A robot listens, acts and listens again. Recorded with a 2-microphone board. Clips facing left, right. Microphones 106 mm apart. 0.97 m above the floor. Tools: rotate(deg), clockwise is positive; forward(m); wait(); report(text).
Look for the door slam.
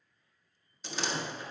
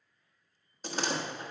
rotate(50)
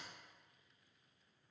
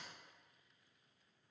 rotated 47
wait()
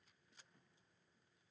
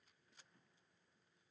report("I heard a door slam, but can't make it out now. It was about straight ahead or 85° right.")